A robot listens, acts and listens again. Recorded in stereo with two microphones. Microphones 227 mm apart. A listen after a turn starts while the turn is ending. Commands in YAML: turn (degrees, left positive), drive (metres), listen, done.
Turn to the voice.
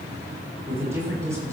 turn: -30
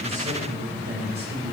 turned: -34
turn: -130
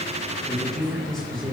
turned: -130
done: "Facing the man speaking, over 4 m away."